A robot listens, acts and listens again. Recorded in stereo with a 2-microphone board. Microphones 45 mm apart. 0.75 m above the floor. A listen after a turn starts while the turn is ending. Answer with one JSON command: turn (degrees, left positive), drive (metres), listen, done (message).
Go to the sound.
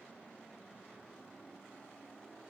{"listen": true}
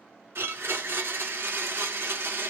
{"turn": -65}
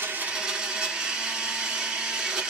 {"turn": -25}
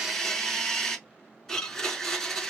{"turn": 10}
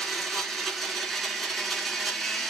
{"drive": 1.0}
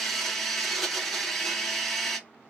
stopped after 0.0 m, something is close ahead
{"done": "Blocked. The blender is further on, straight ahead."}